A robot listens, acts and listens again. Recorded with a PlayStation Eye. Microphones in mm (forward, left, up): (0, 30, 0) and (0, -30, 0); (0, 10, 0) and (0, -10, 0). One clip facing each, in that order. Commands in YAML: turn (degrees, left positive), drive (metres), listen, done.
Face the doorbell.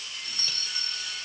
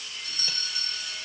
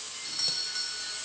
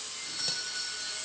turn: 35
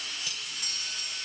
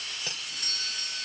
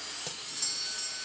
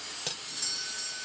done: "Facing the doorbell, 2 to 4 m away."